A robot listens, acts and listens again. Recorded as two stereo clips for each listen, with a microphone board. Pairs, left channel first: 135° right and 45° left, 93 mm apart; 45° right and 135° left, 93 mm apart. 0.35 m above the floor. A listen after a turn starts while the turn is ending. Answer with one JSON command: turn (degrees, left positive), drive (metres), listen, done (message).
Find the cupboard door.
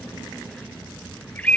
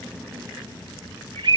{"listen": true}
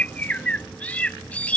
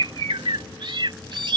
{"listen": true}
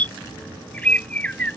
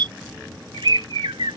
{"done": "I can't make out a cupboard door, only a bird."}